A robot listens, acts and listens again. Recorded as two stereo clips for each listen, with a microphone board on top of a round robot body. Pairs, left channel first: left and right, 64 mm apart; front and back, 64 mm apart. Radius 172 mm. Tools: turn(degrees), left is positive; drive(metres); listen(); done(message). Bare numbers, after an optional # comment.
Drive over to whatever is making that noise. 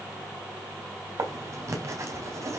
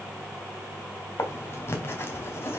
# The writing: 50° right.
turn(-50)
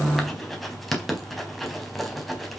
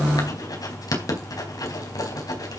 drive(1.0)
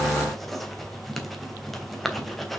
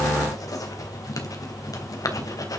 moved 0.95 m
drive(1.0)
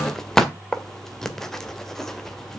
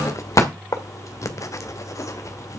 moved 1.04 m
# The writing is now 10° left.
turn(10)
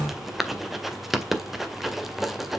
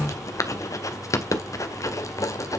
drive(1.0)
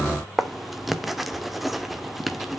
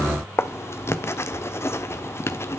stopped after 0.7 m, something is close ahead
done("Arrived at the writing, straight ahead.")